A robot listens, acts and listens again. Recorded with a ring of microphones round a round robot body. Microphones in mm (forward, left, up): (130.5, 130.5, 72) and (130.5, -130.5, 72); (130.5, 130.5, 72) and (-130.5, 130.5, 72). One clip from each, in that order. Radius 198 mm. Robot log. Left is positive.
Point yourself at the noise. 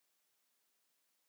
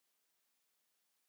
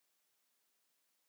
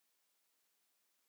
cmd idle
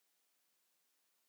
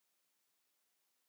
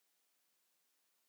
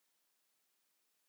cmd idle
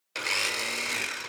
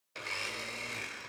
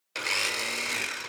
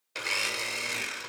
note: The blender: 70° left.
cmd yaw +70
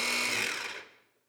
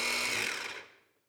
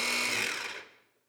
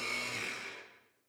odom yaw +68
end: Found it: a blender, straight ahead.